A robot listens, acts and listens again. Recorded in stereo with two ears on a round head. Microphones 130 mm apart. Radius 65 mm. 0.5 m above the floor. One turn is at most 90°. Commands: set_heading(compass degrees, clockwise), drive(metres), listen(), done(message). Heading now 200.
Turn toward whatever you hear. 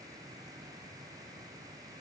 listen()
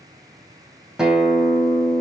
set_heading(230)
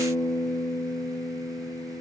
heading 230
set_heading(205)
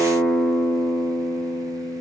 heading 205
set_heading(195)
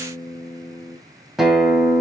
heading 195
done("Facing the guitar, 2 to 4 m away.")